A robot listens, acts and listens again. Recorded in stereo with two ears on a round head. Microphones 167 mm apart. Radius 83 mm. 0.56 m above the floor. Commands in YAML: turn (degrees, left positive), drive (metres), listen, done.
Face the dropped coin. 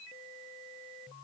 listen: true
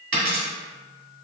turn: -60
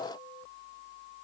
listen: true
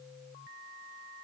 done: "I heard a dropped coin, but can't make it out now. It was about straight ahead or 60° right."